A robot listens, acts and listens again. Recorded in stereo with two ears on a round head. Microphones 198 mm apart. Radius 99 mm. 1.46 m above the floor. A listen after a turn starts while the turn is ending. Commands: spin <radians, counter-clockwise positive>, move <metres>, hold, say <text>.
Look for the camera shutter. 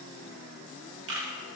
spin -1.05
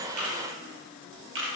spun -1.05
spin -1.05
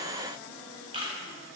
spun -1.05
spin -0.44
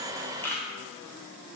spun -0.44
spin 0.17
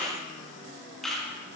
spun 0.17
say Found it: a camera shutter, straight ahead, 1 to 2 m away.